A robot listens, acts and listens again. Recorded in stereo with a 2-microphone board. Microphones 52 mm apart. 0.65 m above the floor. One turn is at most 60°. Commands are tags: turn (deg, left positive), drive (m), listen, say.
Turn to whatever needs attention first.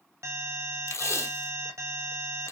<turn deg="-60"/>
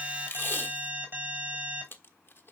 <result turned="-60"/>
<turn deg="-40"/>
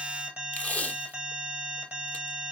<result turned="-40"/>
<turn deg="-25"/>
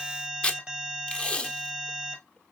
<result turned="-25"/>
<turn deg="-15"/>
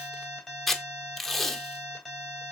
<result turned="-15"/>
<say>Facing the alarm, 2 to 4 m away.</say>